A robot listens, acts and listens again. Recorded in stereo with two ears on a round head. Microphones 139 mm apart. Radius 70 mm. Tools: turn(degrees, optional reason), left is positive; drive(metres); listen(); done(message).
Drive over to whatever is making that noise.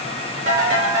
turn(degrees=-60, reason="The ringtone: about 60° right or 120° right.")
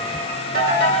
turn(degrees=-60, reason="So it is at 60° right.")
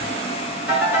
turn(degrees=-10, reason="The ringtone is now 10° right.")
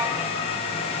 listen()
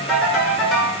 drive(metres=1.0)
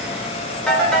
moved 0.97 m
drive(metres=1.0)
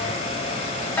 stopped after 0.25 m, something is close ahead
turn(degrees=10, reason="The ringtone is now 10° left.")
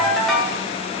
done("I am next to the ringtone.")